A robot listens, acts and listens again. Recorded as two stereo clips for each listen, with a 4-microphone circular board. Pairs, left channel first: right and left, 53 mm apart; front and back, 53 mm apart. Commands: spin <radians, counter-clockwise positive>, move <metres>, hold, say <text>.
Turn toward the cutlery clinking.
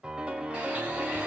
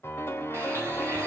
hold
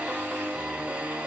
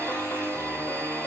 hold
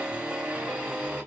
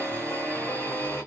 say I can't make out cutlery clinking to turn to.